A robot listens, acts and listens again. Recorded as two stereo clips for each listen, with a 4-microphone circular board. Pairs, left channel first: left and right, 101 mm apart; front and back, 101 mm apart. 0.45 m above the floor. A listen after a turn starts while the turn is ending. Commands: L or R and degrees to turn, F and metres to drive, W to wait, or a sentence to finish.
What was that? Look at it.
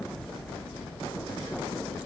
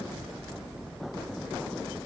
W
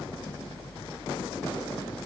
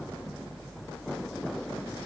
W
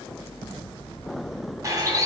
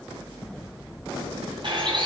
R145
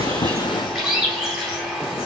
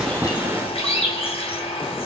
Found it: a bird, straight ahead.